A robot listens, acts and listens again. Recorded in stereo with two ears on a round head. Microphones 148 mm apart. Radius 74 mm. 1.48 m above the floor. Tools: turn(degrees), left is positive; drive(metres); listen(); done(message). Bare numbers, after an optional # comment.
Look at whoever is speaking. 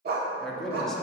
turn(30)
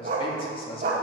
# So it is at 145° left.
turn(145)
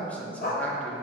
# The man speaking is now 10° left.
turn(10)
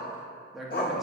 done("Facing the man speaking, 2 to 4 m away.")